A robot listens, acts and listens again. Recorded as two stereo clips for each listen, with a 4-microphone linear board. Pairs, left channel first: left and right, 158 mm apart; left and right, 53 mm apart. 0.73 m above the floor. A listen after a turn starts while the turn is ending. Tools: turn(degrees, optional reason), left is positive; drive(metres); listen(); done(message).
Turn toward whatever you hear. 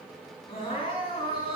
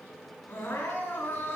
turn(degrees=35, reason="The crying: about 35° left or 145° left.")
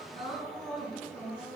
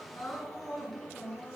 done("Found it: crying, straight ahead.")